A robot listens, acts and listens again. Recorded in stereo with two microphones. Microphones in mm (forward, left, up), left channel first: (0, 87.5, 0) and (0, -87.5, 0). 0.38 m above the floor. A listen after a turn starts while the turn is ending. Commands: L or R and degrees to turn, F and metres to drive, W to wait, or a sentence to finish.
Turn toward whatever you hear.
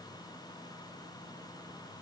W
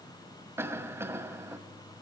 R30
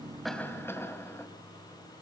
L15
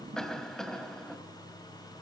Found it: a cough, straight ahead.